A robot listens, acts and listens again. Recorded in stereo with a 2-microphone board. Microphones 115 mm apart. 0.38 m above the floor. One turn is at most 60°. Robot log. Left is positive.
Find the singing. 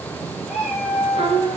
note: The singing: about 55° right or 125° right.
cmd yaw -55
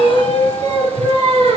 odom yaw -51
note: So it is at 70° right.
cmd yaw -60
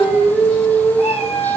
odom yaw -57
note: The singing is now 15° right.
cmd yaw -15
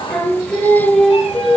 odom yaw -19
end: Facing the singing.